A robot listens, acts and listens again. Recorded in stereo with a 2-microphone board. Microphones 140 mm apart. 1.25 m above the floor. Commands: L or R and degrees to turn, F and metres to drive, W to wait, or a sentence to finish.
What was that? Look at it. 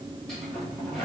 L30
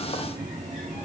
R30
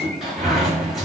Found it: a sliding door, straight ahead.